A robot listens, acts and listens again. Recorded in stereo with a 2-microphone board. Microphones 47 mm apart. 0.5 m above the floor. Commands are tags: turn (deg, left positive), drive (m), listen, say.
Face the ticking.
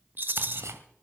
<turn deg="-75"/>
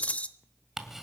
<say>Facing the ticking, 1 to 2 m away.</say>